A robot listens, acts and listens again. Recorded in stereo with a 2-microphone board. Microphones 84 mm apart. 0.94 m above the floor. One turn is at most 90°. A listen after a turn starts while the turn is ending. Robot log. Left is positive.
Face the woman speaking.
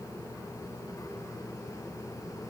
cmd idle
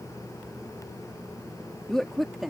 cmd yaw +30
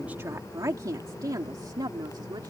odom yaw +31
note: So it is at 55° right.
cmd yaw -55
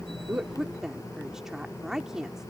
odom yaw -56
end: Found it: a woman speaking, straight ahead.